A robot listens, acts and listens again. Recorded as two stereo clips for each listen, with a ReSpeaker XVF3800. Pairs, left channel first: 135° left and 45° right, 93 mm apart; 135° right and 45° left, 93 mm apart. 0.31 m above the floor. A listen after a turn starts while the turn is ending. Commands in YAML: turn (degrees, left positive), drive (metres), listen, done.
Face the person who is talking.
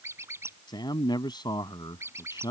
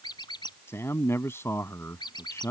turn: 165
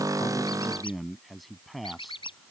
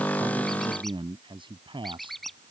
turn: 45
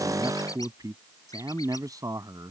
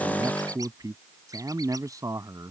done: "Found it: a man speaking, straight ahead."